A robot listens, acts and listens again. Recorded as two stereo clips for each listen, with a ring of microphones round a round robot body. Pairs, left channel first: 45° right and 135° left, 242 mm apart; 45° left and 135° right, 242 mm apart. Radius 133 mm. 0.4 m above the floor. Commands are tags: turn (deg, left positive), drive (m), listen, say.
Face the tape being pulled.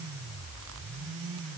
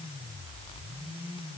<listen/>
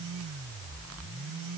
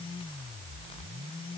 <listen/>
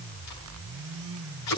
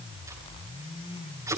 <turn deg="-55"/>
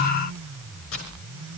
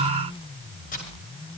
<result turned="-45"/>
<turn deg="-10"/>
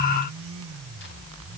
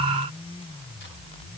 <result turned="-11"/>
<listen/>
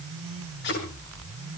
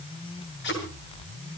<say>Facing the tape being pulled, over 4 m away.</say>